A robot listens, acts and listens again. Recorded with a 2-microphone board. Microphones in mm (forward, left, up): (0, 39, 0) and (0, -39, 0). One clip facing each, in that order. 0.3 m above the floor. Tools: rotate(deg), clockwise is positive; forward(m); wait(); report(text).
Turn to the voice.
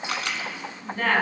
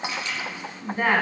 rotate(15)
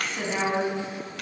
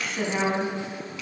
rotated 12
report("Found it: a woman speaking, straight ahead, 2 to 4 m away.")